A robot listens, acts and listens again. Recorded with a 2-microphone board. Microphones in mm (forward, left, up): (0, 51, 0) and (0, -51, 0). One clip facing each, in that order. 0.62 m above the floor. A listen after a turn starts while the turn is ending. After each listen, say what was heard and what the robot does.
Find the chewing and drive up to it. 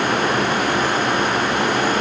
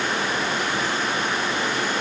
Keep listening.
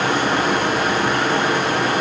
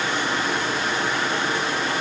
Keep listening.
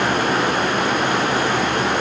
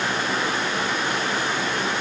I can't make out chewing to turn to.